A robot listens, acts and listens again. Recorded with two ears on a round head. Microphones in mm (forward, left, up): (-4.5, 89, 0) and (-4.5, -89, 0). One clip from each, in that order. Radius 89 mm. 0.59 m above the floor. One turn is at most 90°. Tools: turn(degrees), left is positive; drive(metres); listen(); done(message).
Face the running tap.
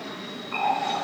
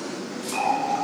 turn(degrees=30)
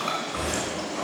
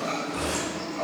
turn(degrees=90)
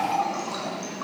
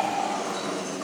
turn(degrees=55)
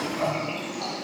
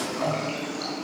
done("Facing the running tap.")